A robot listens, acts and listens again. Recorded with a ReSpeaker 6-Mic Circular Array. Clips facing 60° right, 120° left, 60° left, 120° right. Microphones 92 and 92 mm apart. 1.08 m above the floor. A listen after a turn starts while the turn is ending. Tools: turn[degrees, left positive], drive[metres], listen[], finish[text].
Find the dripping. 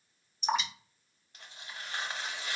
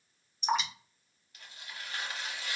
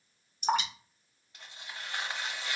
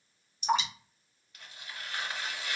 Thought: The dripping: 30° left.
Action: turn[30]
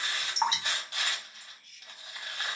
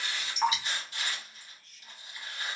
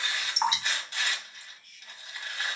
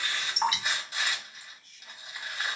Action: finish[Facing the dripping.]